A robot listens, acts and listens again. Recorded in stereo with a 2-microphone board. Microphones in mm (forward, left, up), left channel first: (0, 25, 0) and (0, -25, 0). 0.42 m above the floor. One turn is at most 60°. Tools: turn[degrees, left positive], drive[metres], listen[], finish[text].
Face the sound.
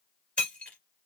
Thought: The breaking glass: about 25° left or 155° left.
Action: turn[25]
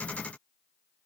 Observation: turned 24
Action: listen[]
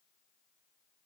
Action: finish[I heard breaking glass, but can't make it out now. It was about straight ahead or 130° left.]